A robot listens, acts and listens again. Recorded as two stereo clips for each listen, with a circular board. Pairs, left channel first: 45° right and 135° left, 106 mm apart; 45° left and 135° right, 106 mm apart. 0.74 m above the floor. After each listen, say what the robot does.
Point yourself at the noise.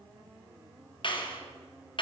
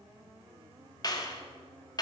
Found it: a clap, straight ahead, 2 to 4 m away.